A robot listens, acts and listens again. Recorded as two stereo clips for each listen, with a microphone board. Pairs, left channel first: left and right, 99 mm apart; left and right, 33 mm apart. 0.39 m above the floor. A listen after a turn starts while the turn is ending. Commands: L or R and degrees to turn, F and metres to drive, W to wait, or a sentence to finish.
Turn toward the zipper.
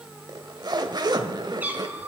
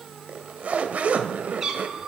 R45
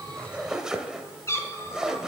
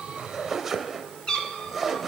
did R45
Found it: a zipper, straight ahead.